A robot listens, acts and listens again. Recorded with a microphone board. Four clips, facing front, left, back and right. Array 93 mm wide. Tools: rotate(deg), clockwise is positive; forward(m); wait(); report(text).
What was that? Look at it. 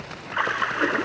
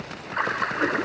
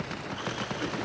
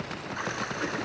rotate(-35)
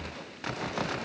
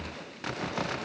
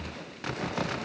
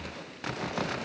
report("I heard a splash from this way, but can't make it out now.")